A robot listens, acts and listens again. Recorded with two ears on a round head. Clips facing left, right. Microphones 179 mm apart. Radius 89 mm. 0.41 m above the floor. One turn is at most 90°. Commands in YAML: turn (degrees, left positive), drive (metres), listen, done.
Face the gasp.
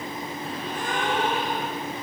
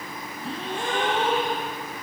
turn: -25
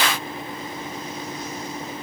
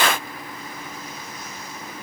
listen: true
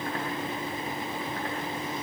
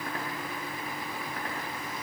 done: "I heard a gasp, but can't make it out now. It was about straight ahead or 130° right."